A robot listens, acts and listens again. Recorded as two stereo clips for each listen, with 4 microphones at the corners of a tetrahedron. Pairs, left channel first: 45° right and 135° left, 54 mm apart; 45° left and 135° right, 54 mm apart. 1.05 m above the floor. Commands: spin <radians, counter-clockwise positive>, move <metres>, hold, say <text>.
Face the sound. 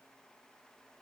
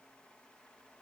hold
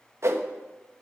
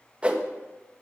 spin 2.71
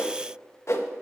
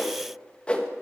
spin -0.44
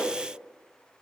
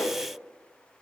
spin 0.17
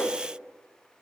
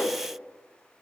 say Found it: a whoosh, straight ahead.